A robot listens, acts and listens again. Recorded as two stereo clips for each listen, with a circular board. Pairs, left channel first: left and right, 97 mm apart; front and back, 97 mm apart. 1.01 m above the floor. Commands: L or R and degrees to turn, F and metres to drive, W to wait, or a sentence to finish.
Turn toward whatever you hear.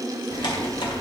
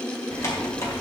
L55
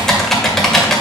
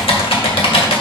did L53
Facing the typing on a keyboard, 1 to 2 m away.